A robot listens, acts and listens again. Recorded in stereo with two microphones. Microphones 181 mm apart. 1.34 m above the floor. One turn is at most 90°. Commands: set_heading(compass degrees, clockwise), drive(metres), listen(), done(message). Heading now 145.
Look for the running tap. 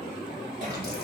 listen()
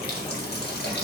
set_heading(80)
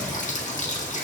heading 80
set_heading(35)
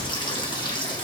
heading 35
set_heading(10)
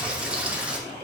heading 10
done("Facing the running tap, 1 to 2 m away.")